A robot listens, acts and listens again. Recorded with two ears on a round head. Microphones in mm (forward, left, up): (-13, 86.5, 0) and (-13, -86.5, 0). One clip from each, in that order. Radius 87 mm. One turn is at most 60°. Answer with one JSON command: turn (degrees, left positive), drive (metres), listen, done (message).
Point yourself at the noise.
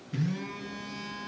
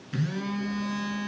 {"turn": -50}
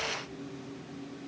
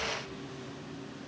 {"turn": -60}
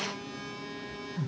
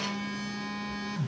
{"turn": -35}
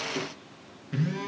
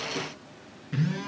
{"done": "Facing the phone buzzing."}